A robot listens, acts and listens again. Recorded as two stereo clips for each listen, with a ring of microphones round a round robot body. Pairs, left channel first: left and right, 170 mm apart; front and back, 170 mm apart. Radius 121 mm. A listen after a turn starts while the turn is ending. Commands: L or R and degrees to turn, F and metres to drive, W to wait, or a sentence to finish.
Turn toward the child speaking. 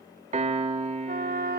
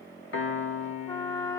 W
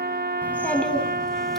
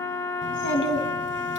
Found it: a child speaking, straight ahead.